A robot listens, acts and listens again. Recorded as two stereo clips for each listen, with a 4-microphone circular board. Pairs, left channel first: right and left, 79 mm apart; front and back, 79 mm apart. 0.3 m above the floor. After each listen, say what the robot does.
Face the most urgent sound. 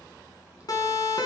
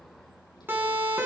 Turn 120° right.
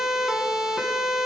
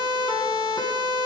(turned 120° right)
Turn 10° left.
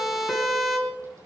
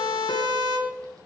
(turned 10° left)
Facing the siren, 2 to 4 m away.